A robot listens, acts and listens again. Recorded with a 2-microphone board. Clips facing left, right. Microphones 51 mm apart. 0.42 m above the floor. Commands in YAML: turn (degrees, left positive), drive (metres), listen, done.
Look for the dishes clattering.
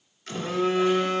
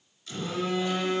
listen: true
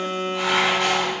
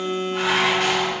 turn: -65
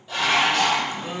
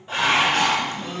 turn: -45
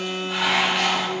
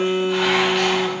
done: "Found it: dishes clattering, straight ahead."